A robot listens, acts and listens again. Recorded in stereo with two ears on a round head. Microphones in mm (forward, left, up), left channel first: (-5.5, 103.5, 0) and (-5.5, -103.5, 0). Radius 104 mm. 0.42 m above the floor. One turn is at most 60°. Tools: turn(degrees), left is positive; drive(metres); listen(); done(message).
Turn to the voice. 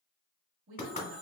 turn(degrees=-60)
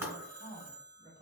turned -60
turn(degrees=-30)
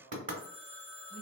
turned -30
done("Found it: a woman speaking, straight ahead.")